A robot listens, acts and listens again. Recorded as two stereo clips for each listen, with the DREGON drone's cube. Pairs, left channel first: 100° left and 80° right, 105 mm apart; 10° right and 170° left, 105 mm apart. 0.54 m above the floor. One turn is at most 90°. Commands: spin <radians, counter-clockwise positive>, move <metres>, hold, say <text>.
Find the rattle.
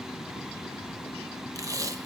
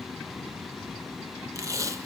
hold
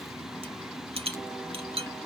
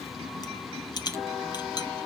spin -0.96
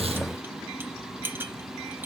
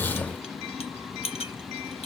spin -0.17
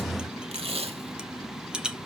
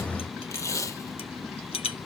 say Facing the rattle, 1 to 2 m away.